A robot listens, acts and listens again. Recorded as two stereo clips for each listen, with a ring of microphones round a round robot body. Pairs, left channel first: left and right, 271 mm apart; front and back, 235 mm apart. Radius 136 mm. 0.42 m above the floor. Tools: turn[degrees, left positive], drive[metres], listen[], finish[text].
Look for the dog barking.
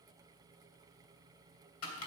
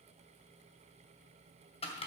Action: listen[]
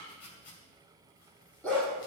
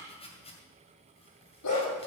Action: finish[Facing the dog barking.]